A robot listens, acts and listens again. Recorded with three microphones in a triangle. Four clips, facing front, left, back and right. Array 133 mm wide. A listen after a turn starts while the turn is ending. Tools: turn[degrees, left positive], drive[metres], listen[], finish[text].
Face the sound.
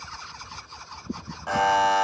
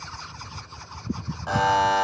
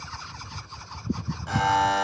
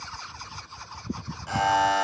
Thought: The buzzer: 45° left.
Action: turn[45]
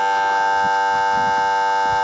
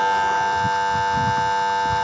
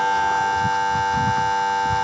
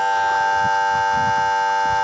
Action: finish[Found it: a buzzer, straight ahead.]